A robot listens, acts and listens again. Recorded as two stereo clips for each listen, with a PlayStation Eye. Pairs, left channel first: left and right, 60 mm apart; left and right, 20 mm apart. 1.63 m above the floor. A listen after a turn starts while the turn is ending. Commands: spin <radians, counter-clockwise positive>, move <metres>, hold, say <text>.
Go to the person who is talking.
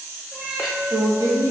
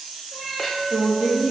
spin -1.22
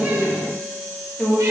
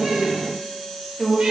move 1.0
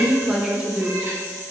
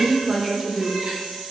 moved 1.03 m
move 1.0
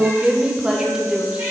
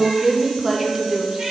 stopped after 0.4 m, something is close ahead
spin -0.26
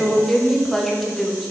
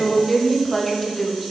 say Arrived at the woman speaking, straight ahead.